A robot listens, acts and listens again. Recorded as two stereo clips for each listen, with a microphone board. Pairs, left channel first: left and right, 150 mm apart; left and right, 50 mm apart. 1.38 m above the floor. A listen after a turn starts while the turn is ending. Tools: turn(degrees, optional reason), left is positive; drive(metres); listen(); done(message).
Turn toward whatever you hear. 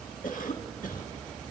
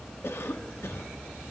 turn(degrees=65, reason="The cough: about 65° left or 115° left.")
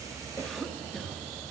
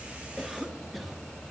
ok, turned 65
done("Found it: a cough, straight ahead, 1 to 2 m away.")